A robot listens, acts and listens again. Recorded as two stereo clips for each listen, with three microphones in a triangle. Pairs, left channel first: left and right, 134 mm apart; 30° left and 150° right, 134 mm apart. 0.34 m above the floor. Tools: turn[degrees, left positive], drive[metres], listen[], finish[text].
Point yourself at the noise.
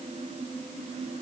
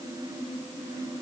Action: listen[]
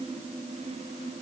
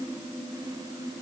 Action: listen[]
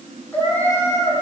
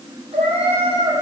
Thought: The cat meowing: 165° left.
Action: turn[165]
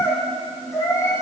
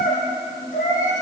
Thought: The cat meowing is now 20° left.
Action: turn[20]
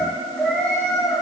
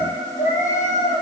Action: finish[Facing the cat meowing, over 4 m away.]